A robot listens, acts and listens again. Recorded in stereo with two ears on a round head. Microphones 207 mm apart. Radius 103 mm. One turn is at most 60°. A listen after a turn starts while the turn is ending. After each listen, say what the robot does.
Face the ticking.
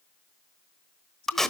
Keep listening.
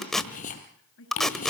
Turn 35° left.
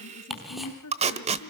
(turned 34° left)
Found it: ticking, straight ahead, 2 to 4 m away.